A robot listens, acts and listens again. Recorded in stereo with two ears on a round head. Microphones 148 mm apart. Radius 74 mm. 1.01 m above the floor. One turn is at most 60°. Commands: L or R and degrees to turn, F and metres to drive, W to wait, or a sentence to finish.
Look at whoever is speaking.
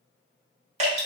W
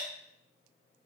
W
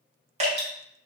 I can't make out anyone speaking to turn to.